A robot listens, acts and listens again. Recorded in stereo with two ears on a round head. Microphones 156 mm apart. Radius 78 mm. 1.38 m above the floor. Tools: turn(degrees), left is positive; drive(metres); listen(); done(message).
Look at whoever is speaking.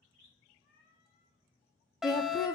turn(degrees=20)
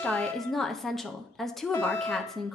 done("Found it: a woman speaking, straight ahead.")